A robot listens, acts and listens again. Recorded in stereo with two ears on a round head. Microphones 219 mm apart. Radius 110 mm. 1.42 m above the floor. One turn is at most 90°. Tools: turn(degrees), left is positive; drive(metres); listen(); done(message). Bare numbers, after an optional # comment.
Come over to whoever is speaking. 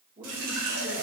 # The man speaking: about 35° right or 145° right.
turn(-35)
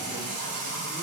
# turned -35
listen()
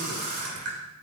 listen()
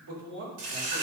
# So it is at 115° right.
turn(-90)
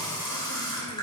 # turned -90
# Nothing new. It was at 25° right.
turn(-25)
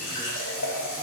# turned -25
listen()
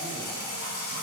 done("I heard a man speaking from this way, but can't make it out now. I did not reach it.")